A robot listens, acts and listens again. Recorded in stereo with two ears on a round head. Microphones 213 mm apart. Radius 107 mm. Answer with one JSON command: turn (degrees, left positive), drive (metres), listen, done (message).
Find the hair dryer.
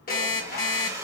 {"turn": -30}
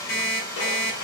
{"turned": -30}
{"turn": 15}
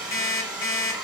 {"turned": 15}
{"done": "Facing the hair dryer, 1 to 2 m away."}